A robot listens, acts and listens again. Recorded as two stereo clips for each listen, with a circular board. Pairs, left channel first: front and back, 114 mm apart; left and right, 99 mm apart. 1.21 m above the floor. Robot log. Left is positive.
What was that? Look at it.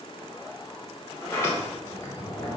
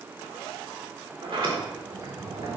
note: The sliding door: 70° right.
cmd yaw -70
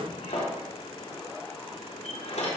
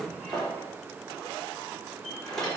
end: Found it: a sliding door, straight ahead.